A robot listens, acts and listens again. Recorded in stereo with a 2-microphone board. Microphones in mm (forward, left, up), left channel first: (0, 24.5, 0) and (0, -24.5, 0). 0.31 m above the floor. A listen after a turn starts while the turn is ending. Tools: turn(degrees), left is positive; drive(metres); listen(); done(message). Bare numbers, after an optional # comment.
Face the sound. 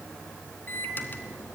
# The microwave: about 35° left or 145° left.
turn(35)
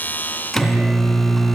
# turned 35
done("Facing the microwave, 2 to 4 m away.")